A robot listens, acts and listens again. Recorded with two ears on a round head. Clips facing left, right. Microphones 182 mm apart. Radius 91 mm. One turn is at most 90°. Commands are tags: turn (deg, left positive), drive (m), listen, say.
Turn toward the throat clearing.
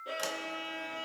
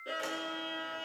<listen/>
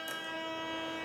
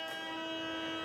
<listen/>
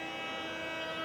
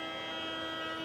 <say>I can't make out throat clearing, only a violin.</say>